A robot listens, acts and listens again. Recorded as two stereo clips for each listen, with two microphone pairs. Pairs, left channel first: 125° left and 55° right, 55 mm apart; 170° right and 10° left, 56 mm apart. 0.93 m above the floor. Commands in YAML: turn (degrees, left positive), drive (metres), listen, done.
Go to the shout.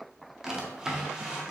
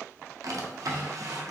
listen: true
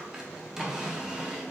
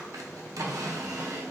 listen: true
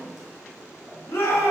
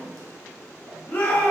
turn: 140
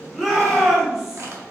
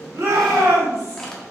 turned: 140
turn: 25
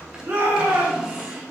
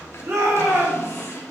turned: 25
turn: -15
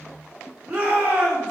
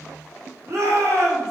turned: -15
drive: 1.0
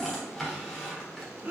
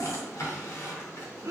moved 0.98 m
drive: 1.0
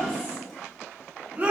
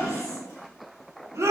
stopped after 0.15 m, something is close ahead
done: "I am next to the shout."